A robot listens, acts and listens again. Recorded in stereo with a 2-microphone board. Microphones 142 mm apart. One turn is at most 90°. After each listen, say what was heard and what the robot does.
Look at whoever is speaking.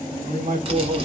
The man speaking: about 60° right or 120° right. Turn 60° right.
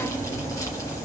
Keep listening.
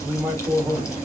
So it is at 15° right. Turn 15° right.
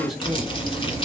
Facing the man speaking, 1 to 2 m away.